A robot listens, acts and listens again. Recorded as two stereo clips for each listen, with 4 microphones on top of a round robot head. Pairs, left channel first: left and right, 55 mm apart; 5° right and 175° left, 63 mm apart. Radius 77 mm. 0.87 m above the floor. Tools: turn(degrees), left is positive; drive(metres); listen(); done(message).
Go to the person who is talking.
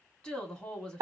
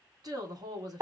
turn(degrees=160)
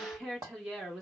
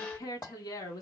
turn(degrees=-10)
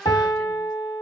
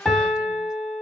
listen()
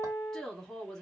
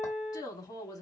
drive(metres=1.0)
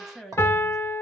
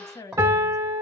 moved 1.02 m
drive(metres=1.0)
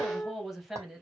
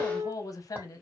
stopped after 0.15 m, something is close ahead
done("Arrived at the woman speaking, straight ahead.")